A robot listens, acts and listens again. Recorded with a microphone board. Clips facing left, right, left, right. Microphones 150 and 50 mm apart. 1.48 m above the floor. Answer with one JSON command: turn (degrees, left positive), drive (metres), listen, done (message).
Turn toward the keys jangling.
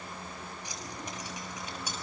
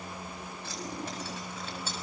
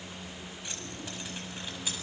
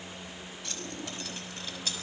{"turn": 30}
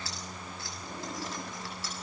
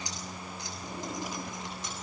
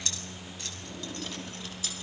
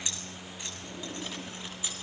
{"turn": -20}
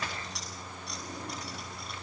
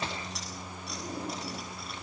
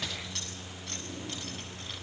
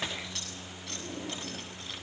{"done": "Found it: keys jangling, straight ahead, over 4 m away."}